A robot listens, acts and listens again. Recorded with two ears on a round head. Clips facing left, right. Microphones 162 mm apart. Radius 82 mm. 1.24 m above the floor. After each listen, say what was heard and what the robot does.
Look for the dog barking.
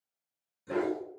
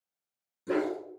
The dog barking: about 70° right or 110° right. Turn 70° right.
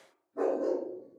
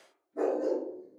So it is at 20° right. Turn 20° right.
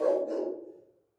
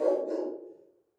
Found it: a dog barking, straight ahead, 2 to 4 m away.